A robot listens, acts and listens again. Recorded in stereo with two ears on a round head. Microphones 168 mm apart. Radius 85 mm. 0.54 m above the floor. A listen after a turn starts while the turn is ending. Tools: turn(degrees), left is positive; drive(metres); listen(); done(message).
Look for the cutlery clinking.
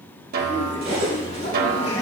turn(degrees=-50)
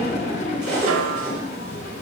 done("Facing the cutlery clinking.")